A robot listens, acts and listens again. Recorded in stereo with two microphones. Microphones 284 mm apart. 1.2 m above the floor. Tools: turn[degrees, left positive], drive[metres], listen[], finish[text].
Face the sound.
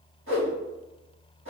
Thought: The whoosh: about 45° right or 135° right.
Action: turn[-45]
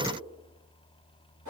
Thought: So it is at 90° right.
Action: turn[-90]
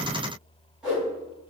Action: finish[Facing the whoosh.]